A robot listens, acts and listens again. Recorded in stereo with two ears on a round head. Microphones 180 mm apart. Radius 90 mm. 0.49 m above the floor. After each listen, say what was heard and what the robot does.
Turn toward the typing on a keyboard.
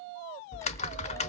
The typing on a keyboard: about 35° left or 145° left. Turn 35° left.
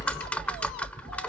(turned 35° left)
So it is at 10° left. Turn 10° left.
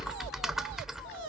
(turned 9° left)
Found it: typing on a keyboard, straight ahead.